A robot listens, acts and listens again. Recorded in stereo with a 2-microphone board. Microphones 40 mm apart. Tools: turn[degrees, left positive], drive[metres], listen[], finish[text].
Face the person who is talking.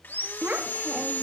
Thought: The child speaking: about 50° right or 130° right.
Action: turn[-50]
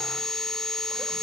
Action: listen[]
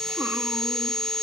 Action: listen[]
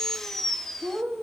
Thought: So it is at 75° right.
Action: turn[-75]
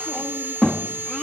Action: finish[Found it: a child speaking, straight ahead, 1 to 2 m away.]